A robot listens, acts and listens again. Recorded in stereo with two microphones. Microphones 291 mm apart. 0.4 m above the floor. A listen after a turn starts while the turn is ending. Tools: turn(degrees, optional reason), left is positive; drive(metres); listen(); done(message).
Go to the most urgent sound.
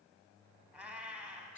listen()
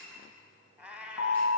turn(degrees=75, reason="The alarm: about 75° left or 105° left.")
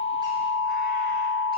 drive(metres=1.0)
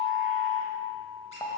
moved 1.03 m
turn(degrees=15, reason="The alarm is now 15° left.")
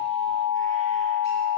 drive(metres=1.0)
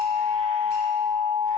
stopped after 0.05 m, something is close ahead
turn(degrees=-10, reason="The alarm is now 10° right.")
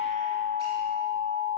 done("I am next to the alarm.")